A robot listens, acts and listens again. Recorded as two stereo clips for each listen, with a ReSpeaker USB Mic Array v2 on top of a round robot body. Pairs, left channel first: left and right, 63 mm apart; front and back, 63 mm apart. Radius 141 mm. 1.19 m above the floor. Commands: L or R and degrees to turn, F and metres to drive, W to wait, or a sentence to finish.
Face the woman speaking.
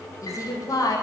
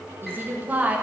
L115
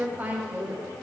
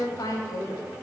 R30
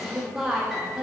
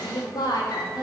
R10
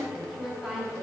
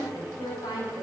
Facing the woman speaking, 2 to 4 m away.